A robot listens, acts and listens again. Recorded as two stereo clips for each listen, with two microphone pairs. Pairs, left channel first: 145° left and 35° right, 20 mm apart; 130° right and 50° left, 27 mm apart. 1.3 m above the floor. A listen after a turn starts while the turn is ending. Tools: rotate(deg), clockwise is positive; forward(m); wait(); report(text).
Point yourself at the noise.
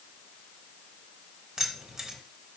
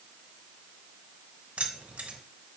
rotate(-25)
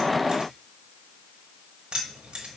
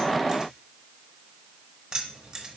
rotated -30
rotate(10)
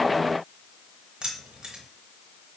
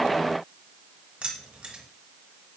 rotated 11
report("Facing the keys jangling, 1 to 2 m away.")